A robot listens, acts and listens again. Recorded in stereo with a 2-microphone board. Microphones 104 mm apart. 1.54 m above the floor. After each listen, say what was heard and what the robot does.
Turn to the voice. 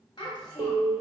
The child speaking: about 45° left or 135° left. Turn 45° left.
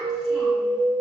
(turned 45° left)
Keep listening.
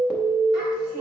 Keep listening.
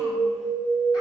I heard a child speaking, but can't make it out now. It was about straight ahead or 90° left.